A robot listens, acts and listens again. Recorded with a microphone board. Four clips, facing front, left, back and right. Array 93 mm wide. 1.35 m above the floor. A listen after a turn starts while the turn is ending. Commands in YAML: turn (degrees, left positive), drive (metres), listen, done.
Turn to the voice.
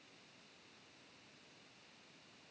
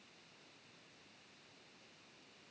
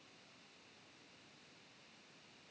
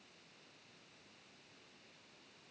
listen: true
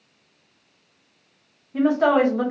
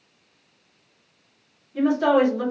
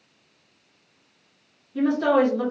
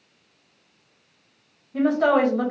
turn: -35
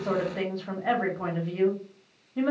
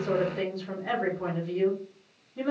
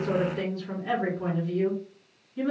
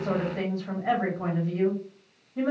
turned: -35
turn: -25
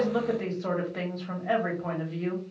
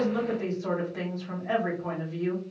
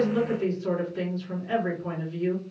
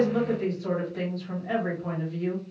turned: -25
turn: 20
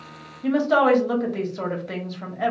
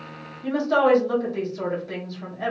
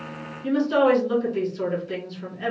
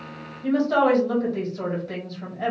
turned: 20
done: "Found it: a woman speaking, straight ahead, 1 to 2 m away."